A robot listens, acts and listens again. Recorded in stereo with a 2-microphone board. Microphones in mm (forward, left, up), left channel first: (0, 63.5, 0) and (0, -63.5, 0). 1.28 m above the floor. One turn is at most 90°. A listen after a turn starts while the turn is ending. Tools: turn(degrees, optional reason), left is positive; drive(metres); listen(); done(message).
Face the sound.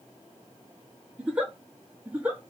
turn(degrees=-30)
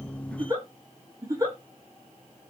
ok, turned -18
turn(degrees=-90, reason="So it is at 155° right.")
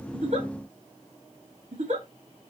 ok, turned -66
turn(degrees=-85, reason="The giggle is now 85° right.")
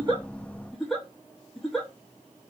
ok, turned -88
done("Found it: a giggle, straight ahead, 1 to 2 m away.")